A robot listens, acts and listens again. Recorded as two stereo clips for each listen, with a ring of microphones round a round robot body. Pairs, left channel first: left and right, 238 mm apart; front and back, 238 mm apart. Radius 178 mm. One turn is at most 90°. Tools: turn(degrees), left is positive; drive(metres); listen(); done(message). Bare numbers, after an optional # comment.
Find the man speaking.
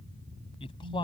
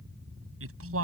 # The man speaking: 165° left.
turn(90)
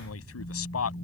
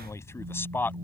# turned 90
# The man speaking is now 80° left.
turn(80)
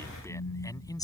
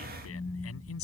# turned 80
# The man speaking is now 15° left.
turn(15)
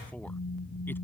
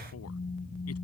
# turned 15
listen()
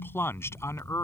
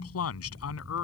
# The man speaking is now 10° left.
turn(10)
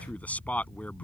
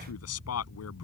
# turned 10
done("Found it: a man speaking, straight ahead.")